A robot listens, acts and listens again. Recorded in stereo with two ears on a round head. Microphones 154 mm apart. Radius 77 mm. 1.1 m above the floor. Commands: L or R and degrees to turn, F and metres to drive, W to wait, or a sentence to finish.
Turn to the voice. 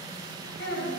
L70
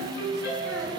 W
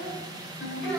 Facing the child speaking.